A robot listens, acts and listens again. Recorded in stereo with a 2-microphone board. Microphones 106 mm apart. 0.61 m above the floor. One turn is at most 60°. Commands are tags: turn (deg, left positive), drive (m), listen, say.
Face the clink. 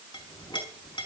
<turn deg="50"/>
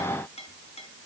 <turn deg="60"/>
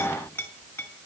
<turn deg="20"/>
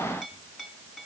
<say>Facing the clink.</say>